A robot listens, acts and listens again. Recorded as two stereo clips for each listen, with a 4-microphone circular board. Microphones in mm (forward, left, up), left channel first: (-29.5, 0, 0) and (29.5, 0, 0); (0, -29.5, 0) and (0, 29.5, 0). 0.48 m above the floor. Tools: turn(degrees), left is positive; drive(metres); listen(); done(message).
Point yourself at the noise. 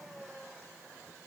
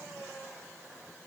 listen()
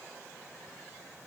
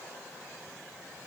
listen()
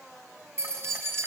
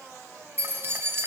turn(degrees=40)
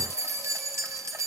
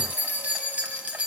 turn(degrees=25)
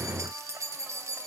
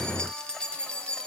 turn(degrees=-20)
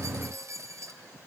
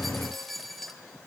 done("Facing the keys jangling, 1 to 2 m away.")